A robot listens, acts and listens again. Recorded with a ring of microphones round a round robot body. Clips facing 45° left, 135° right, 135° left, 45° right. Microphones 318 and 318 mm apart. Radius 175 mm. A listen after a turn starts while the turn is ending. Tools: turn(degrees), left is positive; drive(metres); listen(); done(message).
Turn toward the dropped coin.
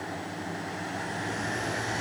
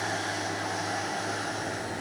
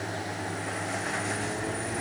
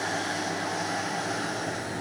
listen()
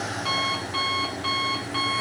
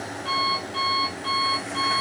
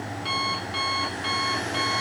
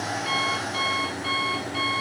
listen()
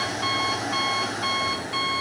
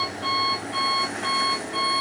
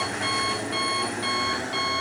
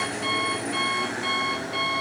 done("I can't make out a dropped coin, only an alarm clock.")